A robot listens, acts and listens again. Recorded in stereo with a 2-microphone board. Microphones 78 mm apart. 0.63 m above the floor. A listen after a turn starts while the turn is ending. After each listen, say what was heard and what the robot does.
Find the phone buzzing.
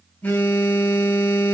The phone buzzing: about 25° left or 155° left. Turn 25° left.
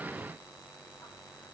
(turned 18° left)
Keep listening.
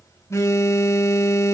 So it is at 140° left. Turn 140° left.
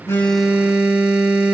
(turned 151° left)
The phone buzzing is now 15° right. Turn 15° right.
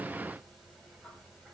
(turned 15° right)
Keep listening.
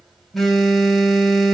Facing the phone buzzing, 2 to 4 m away.